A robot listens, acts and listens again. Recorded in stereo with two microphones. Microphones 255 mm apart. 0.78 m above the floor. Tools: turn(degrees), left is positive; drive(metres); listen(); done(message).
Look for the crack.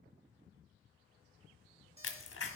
turn(degrees=55)
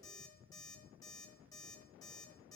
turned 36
listen()
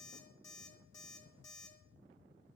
done("I heard a crack, but can't make it out now. It was about 15° left or 90° left.")